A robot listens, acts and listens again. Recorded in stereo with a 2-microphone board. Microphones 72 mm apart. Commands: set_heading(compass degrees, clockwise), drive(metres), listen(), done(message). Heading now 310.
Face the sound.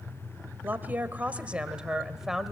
set_heading(280)
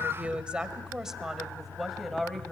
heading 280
set_heading(250)
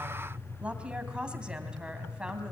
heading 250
set_heading(280)
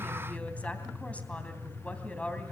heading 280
set_heading(260)
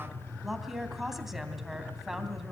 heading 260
done("Found it: a woman speaking, straight ahead, 2 to 4 m away.")